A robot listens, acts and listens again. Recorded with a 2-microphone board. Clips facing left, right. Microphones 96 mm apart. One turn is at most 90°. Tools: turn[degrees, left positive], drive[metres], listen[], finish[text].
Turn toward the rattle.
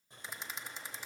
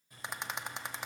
Thought: The rattle: about 65° right or 115° right.
Action: turn[-65]
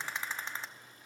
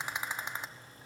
Thought: So it is at 20° right.
Action: turn[-20]
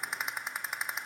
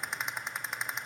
Action: finish[Found it: a rattle, straight ahead.]